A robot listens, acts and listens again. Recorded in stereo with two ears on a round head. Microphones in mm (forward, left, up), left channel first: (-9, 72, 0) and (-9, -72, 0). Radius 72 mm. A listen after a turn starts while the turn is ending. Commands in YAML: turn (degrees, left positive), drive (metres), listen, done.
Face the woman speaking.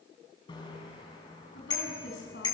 turn: 90
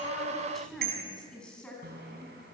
done: "Facing the woman speaking, over 4 m away."